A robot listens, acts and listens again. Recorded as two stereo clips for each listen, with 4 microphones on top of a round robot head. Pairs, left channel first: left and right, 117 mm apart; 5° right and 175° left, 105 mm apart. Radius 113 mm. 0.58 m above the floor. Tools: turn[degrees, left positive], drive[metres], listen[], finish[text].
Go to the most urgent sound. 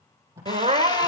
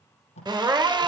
Thought: The crying: 120° right.
Action: turn[-120]
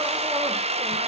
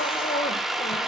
Action: listen[]
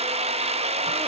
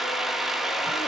Action: listen[]
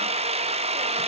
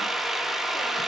Action: finish[Facing where the crying came from. I can't hear it now. I did not reach it.]